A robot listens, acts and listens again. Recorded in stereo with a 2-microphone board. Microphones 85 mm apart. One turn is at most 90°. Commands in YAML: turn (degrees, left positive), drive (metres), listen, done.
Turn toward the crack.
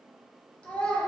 listen: true
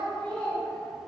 listen: true
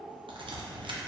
turn: -90
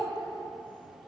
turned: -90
done: "Facing where the crack came from. I can't hear it now."